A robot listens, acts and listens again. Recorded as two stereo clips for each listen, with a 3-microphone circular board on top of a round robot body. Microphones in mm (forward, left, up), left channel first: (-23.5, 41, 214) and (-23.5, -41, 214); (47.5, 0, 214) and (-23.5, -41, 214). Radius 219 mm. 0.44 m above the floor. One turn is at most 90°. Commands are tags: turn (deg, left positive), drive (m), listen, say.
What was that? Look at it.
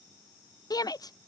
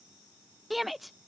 <turn deg="90"/>
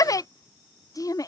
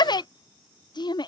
<turn deg="50"/>
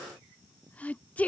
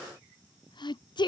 <turn deg="15"/>
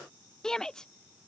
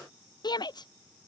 <say>Found it: a shout, straight ahead.</say>